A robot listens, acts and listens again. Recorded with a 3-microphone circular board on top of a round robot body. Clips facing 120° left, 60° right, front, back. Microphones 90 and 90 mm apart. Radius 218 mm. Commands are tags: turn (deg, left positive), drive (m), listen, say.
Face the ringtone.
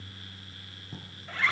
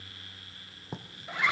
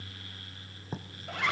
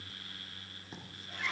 <listen/>
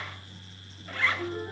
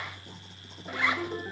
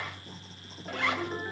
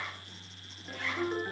<turn deg="-95"/>
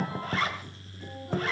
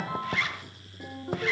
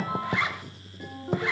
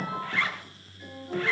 <turn deg="-35"/>
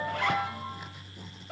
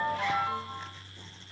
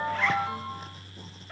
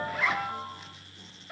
<turn deg="-10"/>
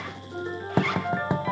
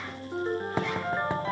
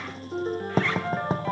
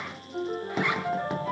<say>Found it: a ringtone, straight ahead, over 4 m away.</say>